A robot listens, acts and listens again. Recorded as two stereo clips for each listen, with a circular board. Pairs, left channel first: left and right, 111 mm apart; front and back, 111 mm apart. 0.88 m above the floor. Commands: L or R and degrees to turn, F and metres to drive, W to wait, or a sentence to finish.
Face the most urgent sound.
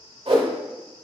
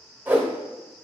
W
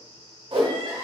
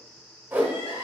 R40
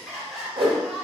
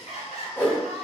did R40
Found it: crying, straight ahead.